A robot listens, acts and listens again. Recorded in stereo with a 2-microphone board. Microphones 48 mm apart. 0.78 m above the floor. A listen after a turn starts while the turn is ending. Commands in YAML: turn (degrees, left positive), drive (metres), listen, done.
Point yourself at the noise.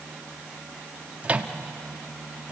turn: -30
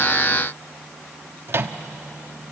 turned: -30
turn: -120
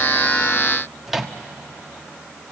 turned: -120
done: "Facing the microwave."